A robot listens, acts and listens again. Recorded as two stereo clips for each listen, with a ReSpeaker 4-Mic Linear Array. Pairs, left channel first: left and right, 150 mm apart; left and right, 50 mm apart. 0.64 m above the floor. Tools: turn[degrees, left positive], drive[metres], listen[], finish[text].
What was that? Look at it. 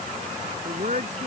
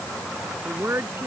Thought: The woman speaking: about 55° right or 125° right.
Action: turn[-55]
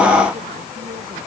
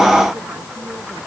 Action: listen[]
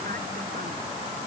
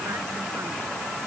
Action: listen[]
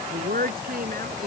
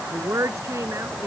Thought: So it is at 80° right.
Action: turn[-80]
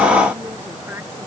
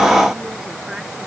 Action: listen[]
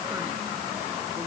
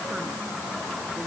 Action: listen[]
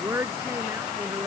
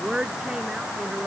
Thought: The woman speaking is now 15° right.
Action: turn[-15]
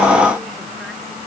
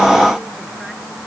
Action: listen[]
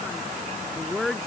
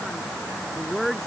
Action: finish[Found it: a woman speaking, straight ahead.]